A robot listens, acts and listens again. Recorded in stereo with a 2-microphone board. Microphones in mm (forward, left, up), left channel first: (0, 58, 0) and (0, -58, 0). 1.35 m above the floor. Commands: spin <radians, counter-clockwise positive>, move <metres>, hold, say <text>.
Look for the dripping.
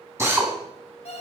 hold
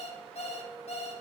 hold
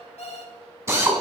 say I can't make out dripping, only a drill and an alarm clock.